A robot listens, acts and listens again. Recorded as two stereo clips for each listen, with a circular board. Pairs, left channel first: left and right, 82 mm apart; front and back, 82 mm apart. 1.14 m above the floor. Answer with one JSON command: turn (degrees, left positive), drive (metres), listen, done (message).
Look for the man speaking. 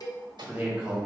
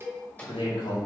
{"turn": -10}
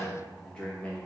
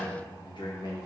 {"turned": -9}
{"turn": 20}
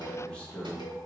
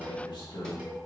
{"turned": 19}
{"turn": 15}
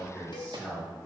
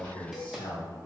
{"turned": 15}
{"turn": 20}
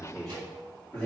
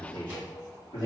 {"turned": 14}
{"turn": 15}
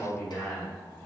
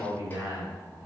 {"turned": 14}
{"turn": 10}
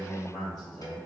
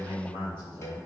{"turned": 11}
{"done": "Facing the man speaking, 2 to 4 m away."}